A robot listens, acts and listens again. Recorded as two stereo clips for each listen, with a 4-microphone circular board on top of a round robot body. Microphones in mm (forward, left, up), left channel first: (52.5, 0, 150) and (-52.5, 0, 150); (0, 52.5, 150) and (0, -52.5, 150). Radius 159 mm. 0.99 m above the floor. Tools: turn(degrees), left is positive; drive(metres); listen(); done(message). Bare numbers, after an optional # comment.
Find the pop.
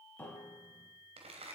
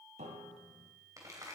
listen()
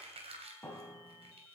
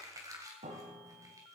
listen()
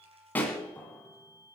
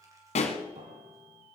# The pop: 75° left.
turn(75)
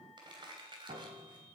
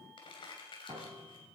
done("I heard a pop from this way, but can't make it out now.")